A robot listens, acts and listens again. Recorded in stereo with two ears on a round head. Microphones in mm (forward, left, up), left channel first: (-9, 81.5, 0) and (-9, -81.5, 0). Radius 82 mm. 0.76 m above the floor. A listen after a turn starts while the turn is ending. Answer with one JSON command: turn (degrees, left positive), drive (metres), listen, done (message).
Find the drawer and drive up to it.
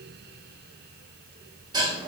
{"listen": true}
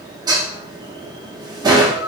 {"listen": true}
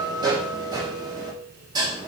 {"done": "I can't make out a drawer, only dishes clattering."}